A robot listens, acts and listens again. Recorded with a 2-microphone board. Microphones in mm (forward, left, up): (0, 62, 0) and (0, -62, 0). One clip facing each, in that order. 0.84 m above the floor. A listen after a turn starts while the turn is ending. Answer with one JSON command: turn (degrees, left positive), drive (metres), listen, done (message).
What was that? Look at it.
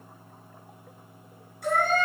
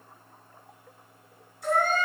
{"turn": 60}
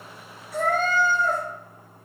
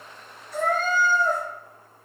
{"turn": 55}
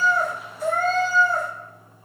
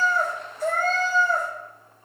{"done": "Found it: a cat meowing, straight ahead, 2 to 4 m away."}